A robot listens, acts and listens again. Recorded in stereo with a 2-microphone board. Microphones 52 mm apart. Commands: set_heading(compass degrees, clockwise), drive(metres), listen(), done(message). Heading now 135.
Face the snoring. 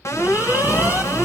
set_heading(185)
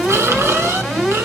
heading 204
set_heading(264)
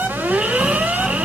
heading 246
set_heading(261)
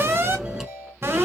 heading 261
done("Facing the snoring, 1 to 2 m away.")